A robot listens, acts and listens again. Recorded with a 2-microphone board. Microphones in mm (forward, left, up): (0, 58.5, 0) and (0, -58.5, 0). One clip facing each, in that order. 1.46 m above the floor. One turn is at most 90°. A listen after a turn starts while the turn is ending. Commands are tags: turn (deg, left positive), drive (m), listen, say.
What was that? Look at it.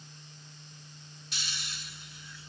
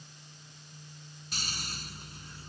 <turn deg="-45"/>
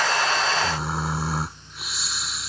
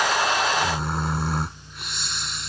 <say>Facing the snoring.</say>